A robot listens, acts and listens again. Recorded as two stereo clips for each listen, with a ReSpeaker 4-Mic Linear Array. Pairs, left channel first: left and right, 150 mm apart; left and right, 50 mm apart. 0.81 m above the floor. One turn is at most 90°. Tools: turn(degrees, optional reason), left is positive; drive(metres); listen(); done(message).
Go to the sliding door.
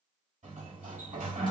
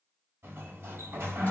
turn(degrees=-60, reason="The sliding door: about 60° right or 120° right.")
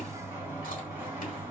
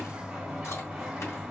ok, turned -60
turn(degrees=-15, reason="So it is at 15° right.")
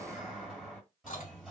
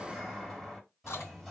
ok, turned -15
drive(metres=1.0)
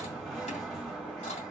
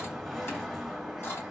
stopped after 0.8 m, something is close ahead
done("Arrived at the sliding door, straight ahead.")